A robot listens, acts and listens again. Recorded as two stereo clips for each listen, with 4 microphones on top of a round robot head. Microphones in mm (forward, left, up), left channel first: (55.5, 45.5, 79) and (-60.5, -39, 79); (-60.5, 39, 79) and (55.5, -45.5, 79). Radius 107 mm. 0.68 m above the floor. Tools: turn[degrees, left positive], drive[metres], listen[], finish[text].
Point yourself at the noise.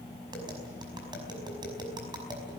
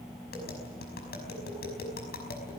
Thought: The tapping: 155° left.
Action: turn[155]
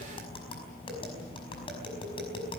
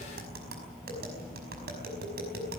Thought: The tapping is now 20° right.
Action: turn[-20]
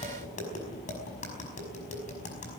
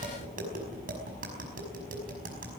Action: finish[Found it: tapping, straight ahead.]